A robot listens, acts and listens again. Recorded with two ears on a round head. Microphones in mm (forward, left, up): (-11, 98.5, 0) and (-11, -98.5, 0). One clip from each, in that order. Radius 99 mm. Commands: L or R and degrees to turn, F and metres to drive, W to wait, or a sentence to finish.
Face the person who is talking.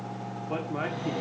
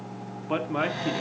R40
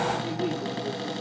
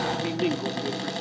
R95
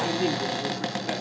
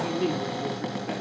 L20
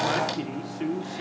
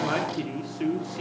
Found it: a man speaking, straight ahead.